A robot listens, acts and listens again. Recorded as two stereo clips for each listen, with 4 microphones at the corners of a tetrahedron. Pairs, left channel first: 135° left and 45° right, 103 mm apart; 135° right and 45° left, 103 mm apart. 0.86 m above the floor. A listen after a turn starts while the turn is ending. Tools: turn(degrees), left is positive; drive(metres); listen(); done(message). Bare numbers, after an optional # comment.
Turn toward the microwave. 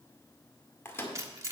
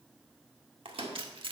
# The microwave: 70° left.
turn(70)
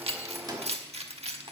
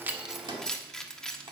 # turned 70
done("Found it: a microwave, straight ahead, 1 to 2 m away.")